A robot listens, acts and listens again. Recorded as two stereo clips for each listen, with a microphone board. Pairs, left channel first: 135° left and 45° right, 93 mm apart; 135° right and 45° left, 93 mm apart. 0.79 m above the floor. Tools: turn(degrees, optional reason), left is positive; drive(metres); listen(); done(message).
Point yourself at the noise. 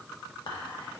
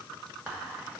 turn(degrees=120, reason="The whispering: 120° left.")
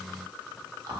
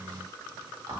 done("Facing the whispering, 1 to 2 m away.")